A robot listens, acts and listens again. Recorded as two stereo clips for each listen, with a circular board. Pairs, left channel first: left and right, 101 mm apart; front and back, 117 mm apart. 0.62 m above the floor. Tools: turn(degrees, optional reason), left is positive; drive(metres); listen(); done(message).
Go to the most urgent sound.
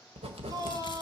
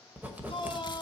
turn(degrees=-40, reason="The shout: 40° right.")
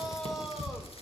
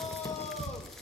drive(metres=1.0)
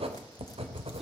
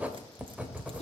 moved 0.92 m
listen()
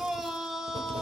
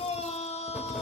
drive(metres=1.0)
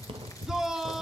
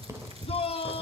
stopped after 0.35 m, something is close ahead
done("Arrived at the shout, straight ahead.")